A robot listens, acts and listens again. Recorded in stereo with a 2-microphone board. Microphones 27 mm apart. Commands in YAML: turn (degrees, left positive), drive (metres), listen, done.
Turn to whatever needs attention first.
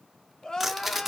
turn: 30
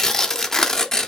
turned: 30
listen: true
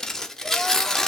listen: true
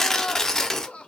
turn: 120
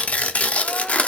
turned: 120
listen: true
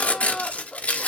turn: 30
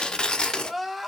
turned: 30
done: "Found it: crying, straight ahead."